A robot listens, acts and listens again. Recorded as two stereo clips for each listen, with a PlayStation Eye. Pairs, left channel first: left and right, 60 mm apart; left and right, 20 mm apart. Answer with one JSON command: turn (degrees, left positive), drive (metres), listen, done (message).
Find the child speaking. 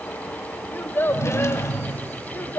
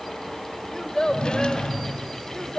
{"turn": 45}
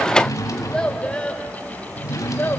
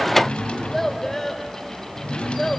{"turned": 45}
{"turn": 30}
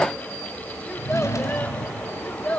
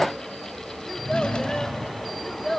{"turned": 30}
{"turn": 25}
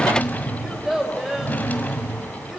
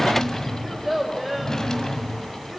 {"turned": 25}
{"done": "Found it: a child speaking, straight ahead, 2 to 4 m away."}